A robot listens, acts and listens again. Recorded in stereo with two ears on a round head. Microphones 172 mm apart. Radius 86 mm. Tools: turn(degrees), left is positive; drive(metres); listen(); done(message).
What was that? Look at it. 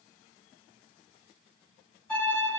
turn(degrees=30)
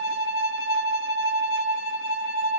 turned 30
turn(degrees=-25)
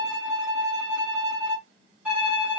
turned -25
turn(degrees=-10)
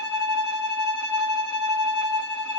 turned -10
done("Found it: a violin, straight ahead.")